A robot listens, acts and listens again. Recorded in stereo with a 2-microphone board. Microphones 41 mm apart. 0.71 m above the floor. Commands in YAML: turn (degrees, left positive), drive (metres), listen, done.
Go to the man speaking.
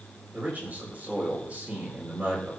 turn: -40
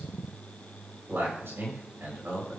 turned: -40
turn: -100
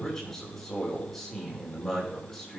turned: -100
drive: 1.0
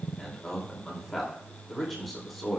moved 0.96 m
drive: 1.0
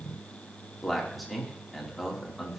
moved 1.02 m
drive: 1.0
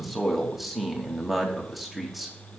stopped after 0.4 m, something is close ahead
done: "Arrived at the man speaking, straight ahead."